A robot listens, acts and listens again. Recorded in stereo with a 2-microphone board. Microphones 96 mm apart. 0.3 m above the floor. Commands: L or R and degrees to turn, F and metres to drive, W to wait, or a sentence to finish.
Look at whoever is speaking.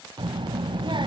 R55
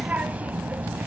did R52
R20
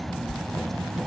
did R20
Found it: a child speaking, straight ahead, under 1 m away.